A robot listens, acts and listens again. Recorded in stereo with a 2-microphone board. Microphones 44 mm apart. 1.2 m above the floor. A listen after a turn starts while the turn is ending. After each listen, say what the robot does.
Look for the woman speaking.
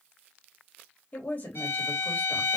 Turn 40° left.
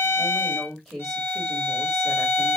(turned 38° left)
Facing the woman speaking, 2 to 4 m away.